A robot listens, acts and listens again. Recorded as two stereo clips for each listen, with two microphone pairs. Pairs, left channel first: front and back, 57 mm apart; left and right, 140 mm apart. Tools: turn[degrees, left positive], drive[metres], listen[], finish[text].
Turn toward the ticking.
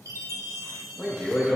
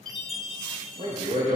Action: listen[]
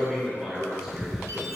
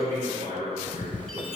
Thought: The ticking: 100° left.
Action: turn[100]
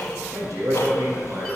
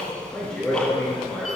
Thought: The ticking is now 10° left.
Action: turn[10]
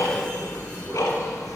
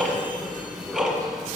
Action: finish[Facing the ticking, 1 to 2 m away.]